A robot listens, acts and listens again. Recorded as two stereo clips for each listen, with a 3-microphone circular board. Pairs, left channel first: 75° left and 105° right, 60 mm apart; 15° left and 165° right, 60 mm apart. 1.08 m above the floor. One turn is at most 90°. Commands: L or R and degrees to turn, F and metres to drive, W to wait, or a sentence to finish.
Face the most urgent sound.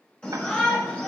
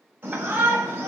L90
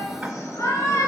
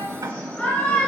L70
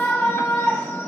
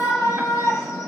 L10
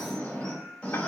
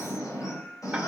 Facing the shout.